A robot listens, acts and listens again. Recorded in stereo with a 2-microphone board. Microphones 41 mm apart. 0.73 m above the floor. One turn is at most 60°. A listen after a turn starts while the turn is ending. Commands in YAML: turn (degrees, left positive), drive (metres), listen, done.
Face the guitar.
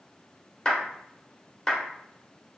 listen: true
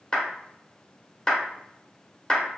listen: true
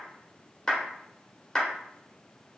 done: "I can't make out a guitar to turn to."